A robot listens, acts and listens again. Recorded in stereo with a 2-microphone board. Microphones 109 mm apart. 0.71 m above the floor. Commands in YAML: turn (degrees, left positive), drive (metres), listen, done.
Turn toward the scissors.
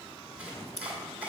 turn: 70
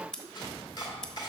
done: "Facing the scissors."